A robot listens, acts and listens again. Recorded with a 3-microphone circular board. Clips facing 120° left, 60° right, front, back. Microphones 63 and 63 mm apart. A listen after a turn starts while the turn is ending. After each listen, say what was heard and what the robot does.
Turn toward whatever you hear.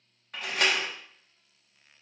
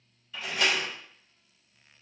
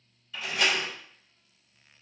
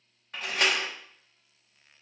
The door slam: 145° left. Turn 145° left.
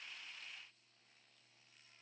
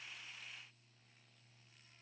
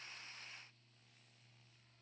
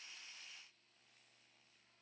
Facing where the door slam came from. I can't hear it now.